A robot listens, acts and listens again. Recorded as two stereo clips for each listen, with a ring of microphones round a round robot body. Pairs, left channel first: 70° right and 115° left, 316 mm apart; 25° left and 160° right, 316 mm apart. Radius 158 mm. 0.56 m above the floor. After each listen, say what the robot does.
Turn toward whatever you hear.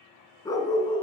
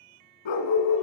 Facing the dog barking.